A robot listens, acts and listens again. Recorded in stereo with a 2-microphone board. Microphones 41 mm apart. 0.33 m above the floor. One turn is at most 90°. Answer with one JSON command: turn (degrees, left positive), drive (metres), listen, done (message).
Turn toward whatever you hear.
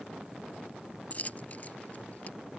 {"turn": 40}
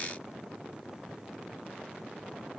{"listen": true}
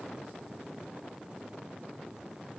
{"done": "I heard a dropped coin, but can't make it out now. It was about straight ahead or 100° left."}